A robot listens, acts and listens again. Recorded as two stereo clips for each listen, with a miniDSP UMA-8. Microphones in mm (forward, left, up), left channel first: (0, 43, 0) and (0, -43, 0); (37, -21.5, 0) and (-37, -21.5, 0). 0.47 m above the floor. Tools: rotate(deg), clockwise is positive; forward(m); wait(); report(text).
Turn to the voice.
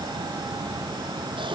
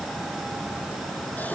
wait()
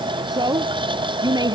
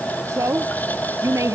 rotate(130)
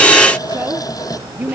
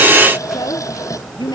rotate(20)
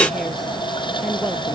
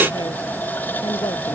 wait()
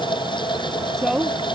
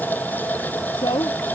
report("Found it: a woman speaking, straight ahead.")